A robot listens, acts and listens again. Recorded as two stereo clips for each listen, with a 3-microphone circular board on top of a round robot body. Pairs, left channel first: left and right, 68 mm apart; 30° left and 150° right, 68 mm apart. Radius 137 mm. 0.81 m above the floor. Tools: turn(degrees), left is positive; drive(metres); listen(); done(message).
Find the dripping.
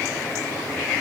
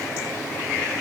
listen()
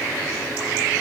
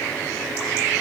listen()
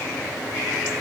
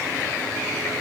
done("I can't make out dripping to turn to.")